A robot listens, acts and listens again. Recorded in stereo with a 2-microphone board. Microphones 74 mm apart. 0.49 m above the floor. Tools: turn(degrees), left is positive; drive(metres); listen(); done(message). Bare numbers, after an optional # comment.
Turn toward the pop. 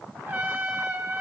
listen()
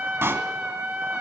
# The pop: about 35° right or 145° right.
turn(-35)
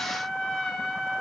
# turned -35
listen()
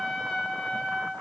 done("I heard a pop, but can't make it out now. It was about straight ahead or 110° right.")